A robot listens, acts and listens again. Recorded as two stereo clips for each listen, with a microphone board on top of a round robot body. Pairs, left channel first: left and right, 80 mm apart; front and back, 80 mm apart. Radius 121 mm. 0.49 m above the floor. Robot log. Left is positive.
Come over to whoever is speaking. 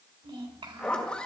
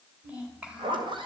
note: The child speaking: 105° right.
cmd yaw -105
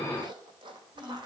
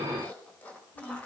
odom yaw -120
note: The child speaking is now 15° left.
cmd yaw +15
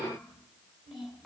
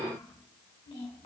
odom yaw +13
cmd fwd 1.0
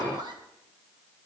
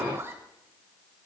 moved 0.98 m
cmd idle
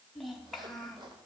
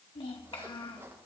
cmd fwd 1.0
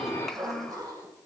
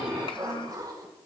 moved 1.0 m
cmd fwd 1.0
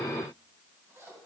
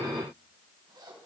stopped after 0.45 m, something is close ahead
cmd idle
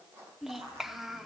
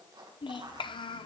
end: I am next to the child speaking.